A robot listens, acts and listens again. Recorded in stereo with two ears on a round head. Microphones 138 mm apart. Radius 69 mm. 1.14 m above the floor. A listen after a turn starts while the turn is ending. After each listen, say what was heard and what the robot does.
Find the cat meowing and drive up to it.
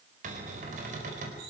Keep listening.
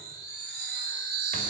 Keep listening.
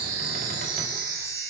I can't make out a cat meowing, only a cupboard door and a chime.